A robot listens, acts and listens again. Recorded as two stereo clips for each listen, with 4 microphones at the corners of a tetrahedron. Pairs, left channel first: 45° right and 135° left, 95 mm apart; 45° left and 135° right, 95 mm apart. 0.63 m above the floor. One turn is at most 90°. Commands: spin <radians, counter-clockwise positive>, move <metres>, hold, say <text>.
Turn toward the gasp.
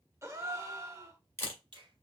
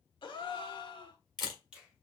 spin 1.31
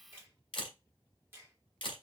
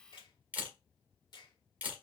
say I heard a gasp from this way, but can't make it out now.